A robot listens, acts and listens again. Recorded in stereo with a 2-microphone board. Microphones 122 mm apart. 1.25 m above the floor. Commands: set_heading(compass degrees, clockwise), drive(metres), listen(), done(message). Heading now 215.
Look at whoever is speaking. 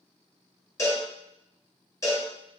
listen()
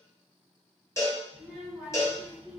set_heading(185)
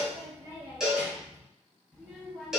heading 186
set_heading(156)
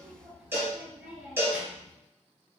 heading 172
set_heading(202)
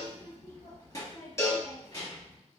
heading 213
set_heading(188)
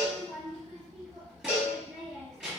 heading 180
done("Found it: a child speaking, straight ahead, 1 to 2 m away.")